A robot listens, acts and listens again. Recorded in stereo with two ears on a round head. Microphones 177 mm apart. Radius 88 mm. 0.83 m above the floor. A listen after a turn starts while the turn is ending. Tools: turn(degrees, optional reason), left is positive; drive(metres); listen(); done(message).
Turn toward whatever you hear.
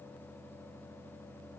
listen()
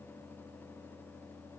listen()
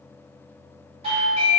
turn(degrees=-30, reason="The doorbell: about 30° right or 150° right.")
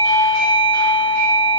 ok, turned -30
turn(degrees=-115, reason="So it is at 115° right.")
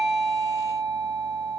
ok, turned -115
turn(degrees=-15, reason="The doorbell is now 15° right.")
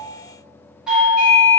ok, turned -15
done("Facing the doorbell, 1 to 2 m away.")